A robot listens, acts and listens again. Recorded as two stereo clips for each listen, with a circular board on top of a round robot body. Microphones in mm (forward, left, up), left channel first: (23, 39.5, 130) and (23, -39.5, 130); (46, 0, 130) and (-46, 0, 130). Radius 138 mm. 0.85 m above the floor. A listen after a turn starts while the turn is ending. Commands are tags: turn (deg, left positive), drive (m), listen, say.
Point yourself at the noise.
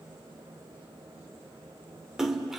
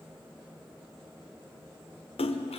<say>Facing the splash, 1 to 2 m away.</say>